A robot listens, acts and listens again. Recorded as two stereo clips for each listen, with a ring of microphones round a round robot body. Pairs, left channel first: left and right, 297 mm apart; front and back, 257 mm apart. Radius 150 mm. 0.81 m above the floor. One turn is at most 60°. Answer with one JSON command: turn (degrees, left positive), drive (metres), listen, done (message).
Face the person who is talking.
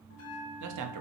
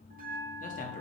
{"turn": -60}
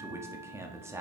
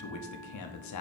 {"turn": -10}
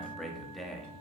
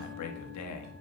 {"done": "Facing the man speaking, 1 to 2 m away."}